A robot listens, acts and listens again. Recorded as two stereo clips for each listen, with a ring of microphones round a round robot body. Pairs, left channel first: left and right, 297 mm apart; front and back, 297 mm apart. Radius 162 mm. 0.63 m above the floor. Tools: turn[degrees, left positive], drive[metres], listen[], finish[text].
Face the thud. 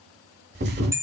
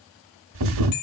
Thought: The thud: 150° right.
Action: turn[-150]
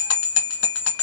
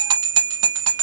Action: finish[Facing where the thud came from. I can't hear it now.]